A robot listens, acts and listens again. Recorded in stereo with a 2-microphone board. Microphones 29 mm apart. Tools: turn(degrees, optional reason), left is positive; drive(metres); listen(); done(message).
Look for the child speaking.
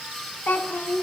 turn(degrees=70, reason="The child speaking: about 70° left or 110° left.")
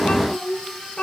turn(degrees=45, reason="So it is at 45° left.")
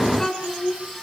turn(degrees=15, reason="The child speaking is now 15° left.")
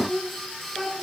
done("Facing the child speaking, over 4 m away.")